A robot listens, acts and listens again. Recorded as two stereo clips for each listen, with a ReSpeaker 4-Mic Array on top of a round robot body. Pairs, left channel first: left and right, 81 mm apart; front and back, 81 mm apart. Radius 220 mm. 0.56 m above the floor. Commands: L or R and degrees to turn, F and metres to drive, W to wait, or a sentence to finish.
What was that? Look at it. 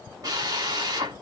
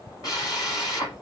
R45
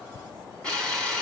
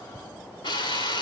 L10
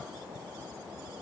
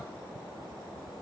W
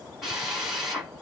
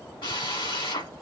Found it: a drill, straight ahead, over 4 m away.